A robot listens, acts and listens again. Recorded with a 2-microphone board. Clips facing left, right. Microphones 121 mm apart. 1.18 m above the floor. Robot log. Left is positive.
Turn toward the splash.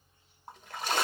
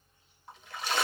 note: The splash: about 45° left or 135° left.
cmd yaw +45
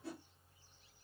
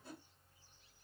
cmd idle
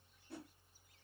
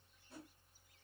end: I heard a splash, but can't make it out now. It was about straight ahead or 90° left.